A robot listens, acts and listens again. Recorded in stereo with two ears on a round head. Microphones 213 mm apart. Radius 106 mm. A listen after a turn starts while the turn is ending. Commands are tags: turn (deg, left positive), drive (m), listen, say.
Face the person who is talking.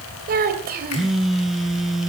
<turn deg="-40"/>
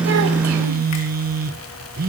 <listen/>
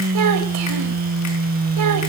<listen/>
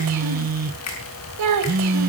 <turn deg="-105"/>
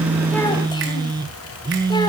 <listen/>
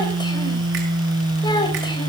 <turn deg="20"/>
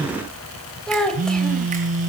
<say>Found it: a child speaking, straight ahead, 2 to 4 m away.</say>